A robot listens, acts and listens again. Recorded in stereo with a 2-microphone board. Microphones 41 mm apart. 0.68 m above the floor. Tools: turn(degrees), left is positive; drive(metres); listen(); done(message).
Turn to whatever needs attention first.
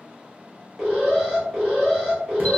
turn(degrees=-30)
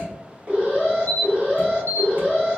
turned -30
turn(degrees=-140)
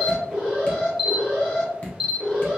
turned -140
turn(degrees=-25)
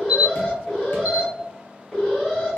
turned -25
turn(degrees=10)
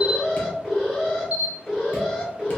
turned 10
done("Found it: an alarm, straight ahead, 2 to 4 m away.")